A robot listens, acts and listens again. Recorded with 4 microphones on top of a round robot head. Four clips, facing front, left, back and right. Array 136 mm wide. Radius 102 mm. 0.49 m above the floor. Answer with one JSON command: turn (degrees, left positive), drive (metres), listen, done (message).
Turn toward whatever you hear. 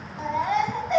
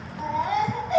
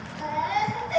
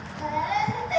{"turn": 30}
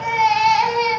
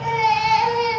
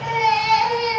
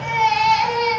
{"done": "Facing the baby crying, 2 to 4 m away."}